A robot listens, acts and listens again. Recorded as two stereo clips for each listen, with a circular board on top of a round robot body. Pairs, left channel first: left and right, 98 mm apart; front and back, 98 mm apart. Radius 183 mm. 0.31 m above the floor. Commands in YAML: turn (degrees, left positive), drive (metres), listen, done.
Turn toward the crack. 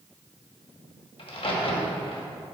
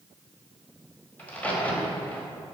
turn: 75
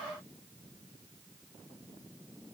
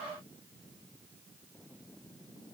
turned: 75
done: "Facing where the crack came from. I can't hear it now."